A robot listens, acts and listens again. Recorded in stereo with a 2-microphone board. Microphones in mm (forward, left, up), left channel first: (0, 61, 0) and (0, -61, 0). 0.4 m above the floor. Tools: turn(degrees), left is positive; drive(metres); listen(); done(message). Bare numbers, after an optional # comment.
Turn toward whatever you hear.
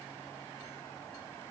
listen()
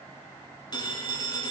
# The phone ringing: about 35° left or 145° left.
turn(35)
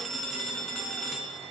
done("Found it: a phone ringing, straight ahead.")